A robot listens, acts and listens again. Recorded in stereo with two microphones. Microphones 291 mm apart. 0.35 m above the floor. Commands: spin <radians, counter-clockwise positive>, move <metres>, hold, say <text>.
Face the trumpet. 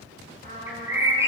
spin -0.61
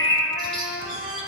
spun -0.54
spin -1.92
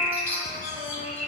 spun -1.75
spin -0.17
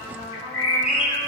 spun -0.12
say Facing the trumpet, 2 to 4 m away.